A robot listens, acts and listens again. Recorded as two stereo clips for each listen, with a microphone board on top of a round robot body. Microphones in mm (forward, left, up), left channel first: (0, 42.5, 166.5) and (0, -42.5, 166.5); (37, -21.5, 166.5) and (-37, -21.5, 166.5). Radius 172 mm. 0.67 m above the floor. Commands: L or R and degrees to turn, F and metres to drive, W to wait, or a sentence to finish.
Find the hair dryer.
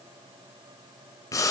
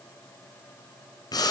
W
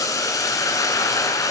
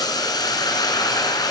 W
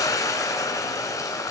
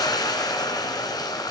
I can't make out a hair dryer, only boiling.